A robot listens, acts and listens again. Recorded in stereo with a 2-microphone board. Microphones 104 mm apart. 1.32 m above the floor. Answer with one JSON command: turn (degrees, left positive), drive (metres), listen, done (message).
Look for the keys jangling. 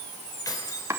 {"turn": 35}
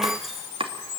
{"listen": true}
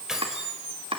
{"done": "Found it: keys jangling, straight ahead, over 4 m away."}